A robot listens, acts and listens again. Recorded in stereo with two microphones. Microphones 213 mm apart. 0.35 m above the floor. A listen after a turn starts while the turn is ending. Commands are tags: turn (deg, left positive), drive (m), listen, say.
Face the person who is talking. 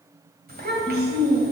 <turn deg="-45"/>
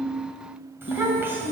<turn deg="-10"/>
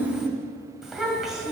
<say>Facing the child speaking.</say>